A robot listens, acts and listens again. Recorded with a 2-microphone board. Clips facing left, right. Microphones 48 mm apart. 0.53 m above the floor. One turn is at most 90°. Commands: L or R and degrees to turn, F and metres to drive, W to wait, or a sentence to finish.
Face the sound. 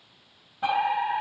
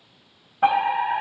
R40
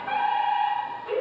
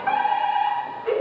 R90
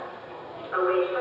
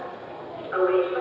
R15
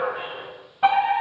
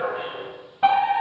Found it: a fire alarm, straight ahead, over 4 m away.